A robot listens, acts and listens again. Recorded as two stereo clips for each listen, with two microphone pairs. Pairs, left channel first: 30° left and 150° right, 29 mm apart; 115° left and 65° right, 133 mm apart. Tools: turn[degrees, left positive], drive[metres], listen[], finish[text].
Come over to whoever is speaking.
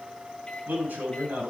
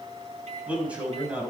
Thought: The man speaking: 145° right.
Action: turn[-145]
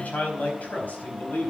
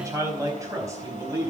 Action: drive[1.0]
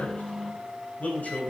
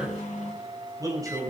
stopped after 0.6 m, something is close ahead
Action: finish[Blocked. The man speaking is further on, straight ahead.]